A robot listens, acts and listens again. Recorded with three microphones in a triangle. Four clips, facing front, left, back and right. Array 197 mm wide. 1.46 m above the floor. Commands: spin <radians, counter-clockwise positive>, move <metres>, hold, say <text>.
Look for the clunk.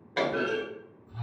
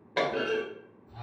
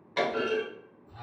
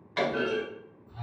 spin 1.13
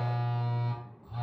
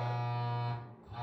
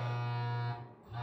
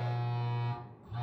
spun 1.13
say I heard a clunk from this way, but can't make it out now.